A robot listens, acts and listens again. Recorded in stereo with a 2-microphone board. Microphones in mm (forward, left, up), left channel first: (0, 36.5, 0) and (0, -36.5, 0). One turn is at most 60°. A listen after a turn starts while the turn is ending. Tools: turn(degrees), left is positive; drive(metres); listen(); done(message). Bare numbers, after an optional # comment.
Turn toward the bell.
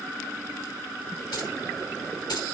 listen()
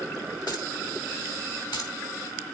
listen()
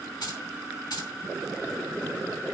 done("I can't make out a bell, only keys jangling.")